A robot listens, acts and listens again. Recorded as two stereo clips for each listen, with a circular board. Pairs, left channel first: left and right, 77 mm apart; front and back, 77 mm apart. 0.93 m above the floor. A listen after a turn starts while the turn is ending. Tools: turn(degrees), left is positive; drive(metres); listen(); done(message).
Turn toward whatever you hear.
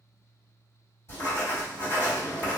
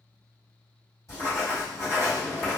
turn(degrees=40)
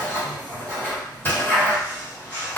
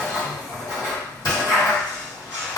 turn(degrees=30)
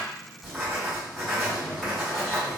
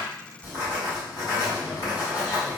done("Facing the writing, 1 to 2 m away.")